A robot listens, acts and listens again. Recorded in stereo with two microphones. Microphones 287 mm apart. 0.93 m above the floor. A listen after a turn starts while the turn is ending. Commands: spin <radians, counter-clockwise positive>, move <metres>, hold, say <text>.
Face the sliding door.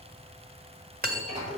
spin -0.44
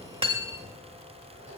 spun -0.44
hold
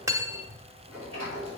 spin -2.36
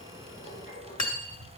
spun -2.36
hold
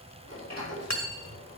spin -0.96
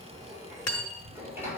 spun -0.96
spin -0.17
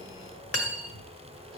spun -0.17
hold
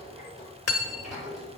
say Facing the sliding door, over 4 m away.